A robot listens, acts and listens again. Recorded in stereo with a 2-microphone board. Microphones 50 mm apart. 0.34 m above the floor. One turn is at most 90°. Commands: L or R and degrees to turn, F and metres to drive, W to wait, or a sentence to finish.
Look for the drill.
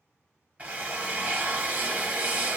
R35
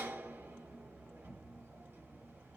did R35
R90
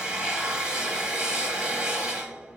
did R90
R20
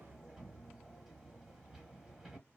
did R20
W
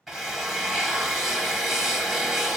Found it: a drill, straight ahead, 1 to 2 m away.